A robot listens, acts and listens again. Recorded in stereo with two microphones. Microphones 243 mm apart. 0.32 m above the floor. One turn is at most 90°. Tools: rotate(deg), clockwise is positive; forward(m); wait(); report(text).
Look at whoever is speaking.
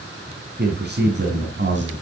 rotate(50)
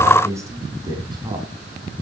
rotate(20)
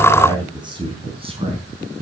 rotate(30)
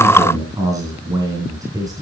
rotate(15)
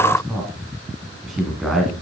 report("Facing the man speaking.")